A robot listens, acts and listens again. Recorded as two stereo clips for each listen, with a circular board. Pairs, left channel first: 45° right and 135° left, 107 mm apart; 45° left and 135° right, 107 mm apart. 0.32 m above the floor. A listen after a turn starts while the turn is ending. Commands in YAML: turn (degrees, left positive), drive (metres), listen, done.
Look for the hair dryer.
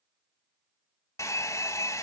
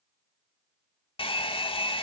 turn: 15
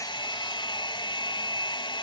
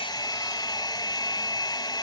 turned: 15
done: "Found it: a hair dryer, straight ahead."